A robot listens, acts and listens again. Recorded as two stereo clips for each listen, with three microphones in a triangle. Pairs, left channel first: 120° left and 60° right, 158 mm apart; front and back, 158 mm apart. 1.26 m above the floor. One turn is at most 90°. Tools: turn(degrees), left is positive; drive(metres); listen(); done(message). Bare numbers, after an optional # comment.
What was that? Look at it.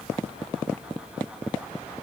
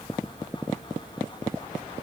listen()
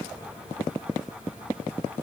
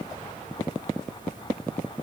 listen()
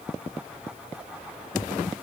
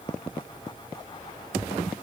done("I can't make out anything to turn to.")